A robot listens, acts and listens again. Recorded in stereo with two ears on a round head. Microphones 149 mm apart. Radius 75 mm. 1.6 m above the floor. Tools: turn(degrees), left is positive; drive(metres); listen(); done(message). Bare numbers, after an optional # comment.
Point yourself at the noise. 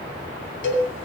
turn(90)
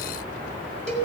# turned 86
done("Facing the cowbell.")